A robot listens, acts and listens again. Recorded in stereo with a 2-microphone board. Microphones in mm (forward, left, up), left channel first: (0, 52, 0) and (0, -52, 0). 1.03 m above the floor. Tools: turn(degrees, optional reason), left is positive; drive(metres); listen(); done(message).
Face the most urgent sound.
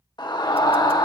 turn(degrees=45, reason="The scream: about 45° left or 135° left.")
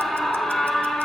done("Found it: a scream, straight ahead.")